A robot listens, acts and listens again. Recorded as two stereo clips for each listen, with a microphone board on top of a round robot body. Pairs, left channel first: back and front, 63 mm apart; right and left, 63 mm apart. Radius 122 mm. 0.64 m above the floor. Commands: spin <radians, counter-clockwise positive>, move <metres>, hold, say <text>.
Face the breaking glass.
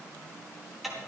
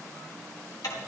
hold
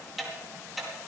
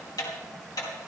hold
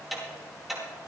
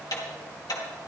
say I can't make out breaking glass, only ticking.